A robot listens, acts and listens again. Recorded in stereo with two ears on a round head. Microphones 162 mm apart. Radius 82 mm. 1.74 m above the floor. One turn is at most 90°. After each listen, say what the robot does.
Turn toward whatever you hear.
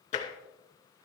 Turn 35° left.
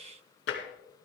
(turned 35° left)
Turn 90° left.
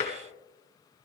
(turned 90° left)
Turn 40° left.
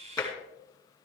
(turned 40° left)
Turn 20° left.
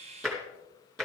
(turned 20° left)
Found it: tapping, straight ahead.